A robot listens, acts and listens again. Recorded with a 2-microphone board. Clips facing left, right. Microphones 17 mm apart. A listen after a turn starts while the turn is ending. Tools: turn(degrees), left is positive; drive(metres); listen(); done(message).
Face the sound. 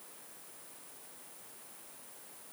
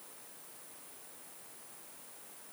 listen()
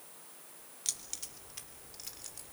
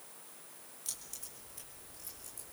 turn(degrees=60)
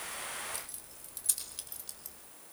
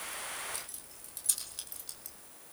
done("Facing the keys jangling.")